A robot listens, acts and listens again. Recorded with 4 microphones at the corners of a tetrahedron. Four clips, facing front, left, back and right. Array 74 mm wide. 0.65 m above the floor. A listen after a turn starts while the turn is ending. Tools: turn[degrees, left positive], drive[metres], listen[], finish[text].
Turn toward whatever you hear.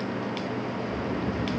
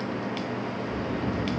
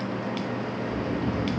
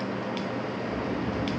Thought: The snoring: 135° left.
Action: turn[135]
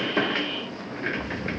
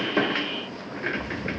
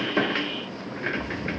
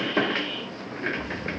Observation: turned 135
Thought: The snoring is now 35° left.
Action: turn[35]
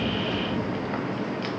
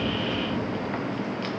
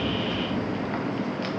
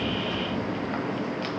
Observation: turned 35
Action: listen[]
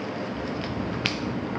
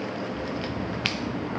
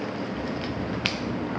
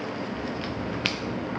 Thought: The snoring is now 15° left.
Action: turn[15]
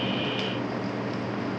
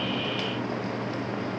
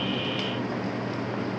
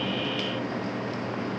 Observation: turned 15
Action: listen[]
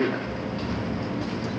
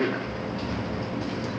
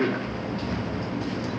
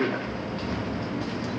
Action: finish[Found it: snoring, straight ahead, 2 to 4 m away.]